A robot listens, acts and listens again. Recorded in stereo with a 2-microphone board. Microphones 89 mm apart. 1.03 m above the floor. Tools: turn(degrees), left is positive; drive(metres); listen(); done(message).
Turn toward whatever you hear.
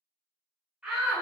turn(degrees=-30)
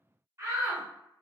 turn(degrees=-140)
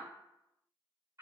turn(degrees=-50)
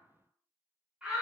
turn(degrees=-15)
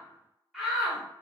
done("Facing the shout.")